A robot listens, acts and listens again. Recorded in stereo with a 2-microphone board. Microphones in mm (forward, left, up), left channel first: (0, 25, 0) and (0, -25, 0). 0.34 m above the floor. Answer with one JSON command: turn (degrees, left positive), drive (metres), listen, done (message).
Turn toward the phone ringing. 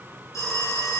{"turn": 90}
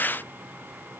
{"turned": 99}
{"turn": -10}
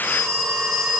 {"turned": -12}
{"done": "Found it: a phone ringing, straight ahead."}